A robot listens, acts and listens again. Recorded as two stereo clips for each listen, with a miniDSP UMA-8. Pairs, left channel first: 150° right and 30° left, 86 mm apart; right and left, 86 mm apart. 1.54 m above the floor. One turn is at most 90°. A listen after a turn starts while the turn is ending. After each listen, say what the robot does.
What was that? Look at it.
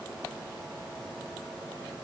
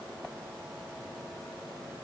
Keep listening.
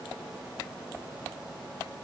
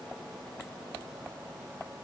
Keep listening.
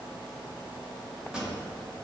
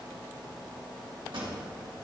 Turn 90° left.
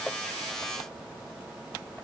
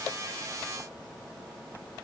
Turn 20° left.
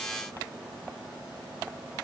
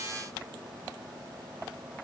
I heard a pop from this way, but can't make it out now.